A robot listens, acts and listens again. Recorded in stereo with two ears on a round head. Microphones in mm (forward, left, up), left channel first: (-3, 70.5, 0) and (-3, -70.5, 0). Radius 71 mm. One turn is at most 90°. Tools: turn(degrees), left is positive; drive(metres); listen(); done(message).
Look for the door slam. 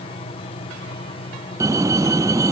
turn(degrees=-20)
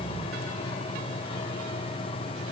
listen()
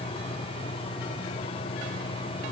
done("I heard a door slam, but can't make it out now. It was about straight ahead or 140° right.")